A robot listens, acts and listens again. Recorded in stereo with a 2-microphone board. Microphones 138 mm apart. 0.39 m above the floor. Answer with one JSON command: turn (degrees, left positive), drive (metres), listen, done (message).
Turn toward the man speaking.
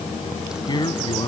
{"turn": 40}
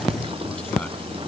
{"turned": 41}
{"listen": true}
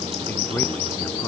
{"listen": true}
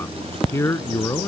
{"turn": 25}
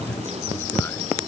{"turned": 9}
{"turn": 15}
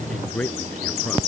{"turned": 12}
{"turn": 10}
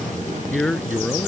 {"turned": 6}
{"done": "Found it: a man speaking, straight ahead."}